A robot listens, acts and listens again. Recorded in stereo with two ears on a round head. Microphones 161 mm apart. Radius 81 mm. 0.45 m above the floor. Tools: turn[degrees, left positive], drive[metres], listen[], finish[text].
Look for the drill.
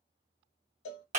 Action: listen[]
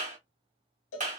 Action: listen[]
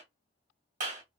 Action: finish[I can't make out a drill, only a clap and a cowbell.]